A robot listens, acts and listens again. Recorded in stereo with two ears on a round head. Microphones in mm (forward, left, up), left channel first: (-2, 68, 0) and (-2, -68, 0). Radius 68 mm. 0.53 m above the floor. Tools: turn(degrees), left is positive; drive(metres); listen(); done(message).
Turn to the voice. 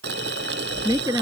turn(degrees=-25)
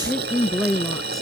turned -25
done("Facing the woman speaking.")